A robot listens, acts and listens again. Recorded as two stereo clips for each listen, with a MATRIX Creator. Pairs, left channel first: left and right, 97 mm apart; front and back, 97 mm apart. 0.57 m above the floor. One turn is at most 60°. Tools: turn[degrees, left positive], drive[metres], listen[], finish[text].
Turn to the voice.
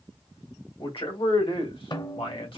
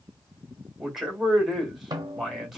Thought: The man speaking: 90° left.
Action: turn[60]
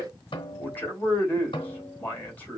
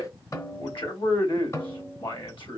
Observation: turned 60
Thought: The man speaking is now 20° left.
Action: turn[20]
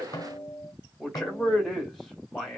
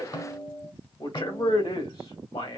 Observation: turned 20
Action: finish[Facing the man speaking.]